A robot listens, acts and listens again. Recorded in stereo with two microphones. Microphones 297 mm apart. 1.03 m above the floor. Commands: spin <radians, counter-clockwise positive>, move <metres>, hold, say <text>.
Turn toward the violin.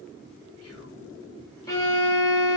spin 0.52
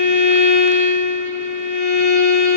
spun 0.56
spin 2.44
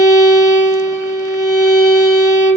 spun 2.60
spin -0.17
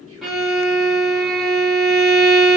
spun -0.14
say Facing the violin, under 1 m away.